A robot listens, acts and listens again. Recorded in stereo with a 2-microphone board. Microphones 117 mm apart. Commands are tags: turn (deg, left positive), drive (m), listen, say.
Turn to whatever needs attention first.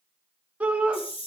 <turn deg="-30"/>
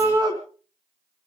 <turn deg="-140"/>
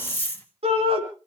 <turn deg="-70"/>
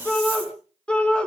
<turn deg="10"/>
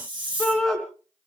<say>Found it: a shout, straight ahead, over 4 m away.</say>